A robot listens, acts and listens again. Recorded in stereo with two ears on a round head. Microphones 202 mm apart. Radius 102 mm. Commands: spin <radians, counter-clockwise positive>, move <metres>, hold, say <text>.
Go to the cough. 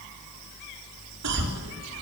spin -1.57
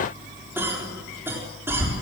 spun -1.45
spin -0.17
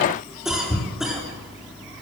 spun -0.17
move 1.0
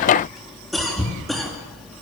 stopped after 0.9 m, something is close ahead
say Blocked. The cough is further on, straight ahead.